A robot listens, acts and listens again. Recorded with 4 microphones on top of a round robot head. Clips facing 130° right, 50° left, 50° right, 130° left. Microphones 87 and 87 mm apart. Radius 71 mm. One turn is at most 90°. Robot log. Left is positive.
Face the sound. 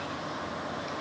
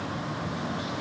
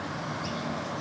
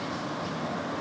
cmd idle
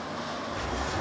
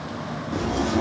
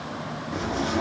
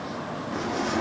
note: The zipper: 40° left.
cmd yaw +40
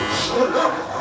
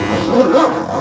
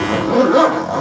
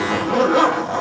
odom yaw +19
note: The zipper is now 20° left.
cmd yaw +20
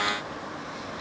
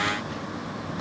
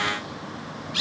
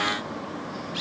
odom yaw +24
cmd idle
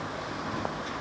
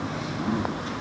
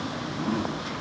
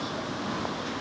end: Found it: a zipper, straight ahead, under 1 m away.